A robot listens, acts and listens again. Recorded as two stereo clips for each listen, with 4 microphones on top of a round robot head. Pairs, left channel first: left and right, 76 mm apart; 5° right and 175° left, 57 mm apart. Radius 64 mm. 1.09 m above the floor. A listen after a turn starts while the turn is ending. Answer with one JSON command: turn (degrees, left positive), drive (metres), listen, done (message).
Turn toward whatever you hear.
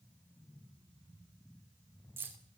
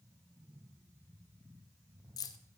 {"turn": -20}
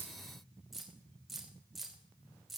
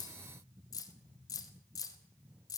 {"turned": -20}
{"done": "Facing the keys jangling, 2 to 4 m away."}